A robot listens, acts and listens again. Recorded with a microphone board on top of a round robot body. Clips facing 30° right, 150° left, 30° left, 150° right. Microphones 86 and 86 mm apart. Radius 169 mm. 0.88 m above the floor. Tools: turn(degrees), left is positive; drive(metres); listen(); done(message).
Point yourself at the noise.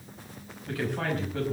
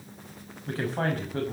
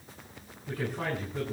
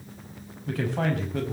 turn(degrees=-160)
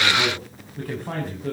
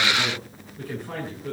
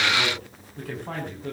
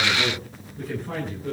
done("Facing the man speaking.")